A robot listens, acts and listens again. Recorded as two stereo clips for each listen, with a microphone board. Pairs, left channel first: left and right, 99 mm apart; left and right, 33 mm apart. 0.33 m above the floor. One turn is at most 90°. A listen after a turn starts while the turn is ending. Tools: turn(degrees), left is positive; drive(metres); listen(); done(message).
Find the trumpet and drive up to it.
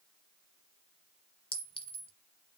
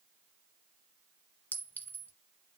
listen()
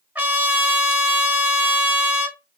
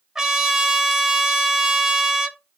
turn(degrees=-20)
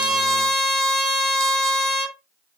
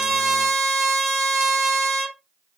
drive(metres=1.0)
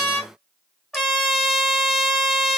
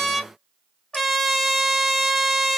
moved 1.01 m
drive(metres=1.0)
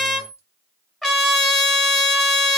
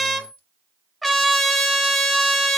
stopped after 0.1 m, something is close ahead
done("I am next to the trumpet.")